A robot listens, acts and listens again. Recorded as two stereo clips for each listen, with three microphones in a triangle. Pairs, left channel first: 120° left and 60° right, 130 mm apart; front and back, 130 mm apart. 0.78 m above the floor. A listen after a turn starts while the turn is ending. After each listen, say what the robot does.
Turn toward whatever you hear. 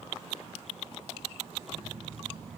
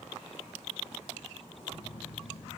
Turn 35° right.
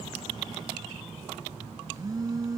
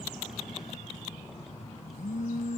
Found it: a phone buzzing, straight ahead.